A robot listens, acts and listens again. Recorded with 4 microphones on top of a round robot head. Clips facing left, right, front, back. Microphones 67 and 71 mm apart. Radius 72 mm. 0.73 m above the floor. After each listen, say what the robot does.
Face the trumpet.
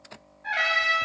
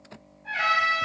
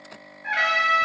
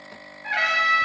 Turn 75° left.
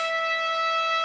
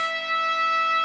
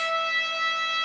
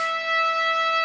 Turn 20° left.
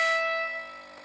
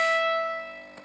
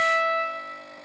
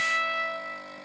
Turn 10° left.
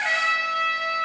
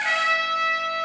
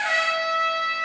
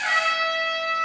Found it: a trumpet, straight ahead, 2 to 4 m away.